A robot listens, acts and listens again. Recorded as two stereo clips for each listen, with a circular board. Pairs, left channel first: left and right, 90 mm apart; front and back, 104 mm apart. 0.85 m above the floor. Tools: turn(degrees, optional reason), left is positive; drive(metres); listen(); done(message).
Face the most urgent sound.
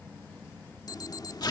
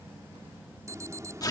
turn(degrees=125, reason="The alarm: 125° left.")
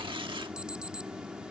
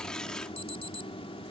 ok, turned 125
turn(degrees=-10, reason="The alarm is now 10° right.")
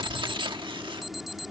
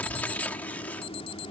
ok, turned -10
done("Found it: an alarm, straight ahead.")